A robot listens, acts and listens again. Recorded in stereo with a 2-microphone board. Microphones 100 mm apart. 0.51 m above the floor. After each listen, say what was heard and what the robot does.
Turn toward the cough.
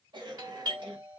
The cough: about 50° right or 130° right. Turn 50° right.
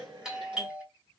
So it is at 70° right. Turn 70° right.
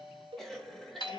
Facing the cough.